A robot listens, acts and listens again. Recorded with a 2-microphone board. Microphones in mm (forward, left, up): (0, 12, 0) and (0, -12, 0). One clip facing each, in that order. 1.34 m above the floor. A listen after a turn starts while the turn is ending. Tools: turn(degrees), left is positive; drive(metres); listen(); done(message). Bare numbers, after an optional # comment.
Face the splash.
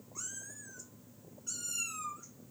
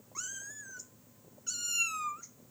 listen()
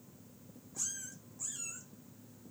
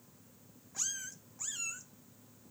listen()
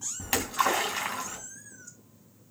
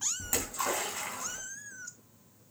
# The splash: about 65° left or 115° left.
turn(65)
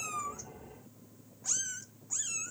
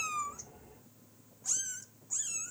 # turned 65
listen()
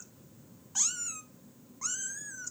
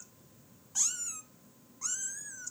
done("I heard a splash, but can't make it out now. It was about straight ahead or 50° left.")